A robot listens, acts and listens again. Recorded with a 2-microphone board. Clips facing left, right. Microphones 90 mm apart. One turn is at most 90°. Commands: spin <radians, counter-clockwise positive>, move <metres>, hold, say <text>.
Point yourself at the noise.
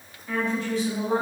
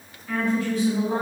spin 0.52
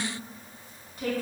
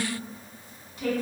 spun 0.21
spin 0.70
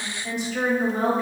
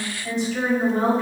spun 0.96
say Found it: a woman speaking, straight ahead.